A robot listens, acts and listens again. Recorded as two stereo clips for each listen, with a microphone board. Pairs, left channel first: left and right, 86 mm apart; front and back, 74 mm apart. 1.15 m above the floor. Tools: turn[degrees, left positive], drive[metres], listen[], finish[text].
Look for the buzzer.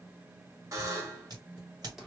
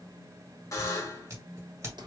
Thought: The buzzer: 45° right.
Action: turn[-45]
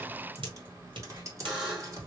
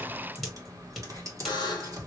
Action: finish[Facing the buzzer.]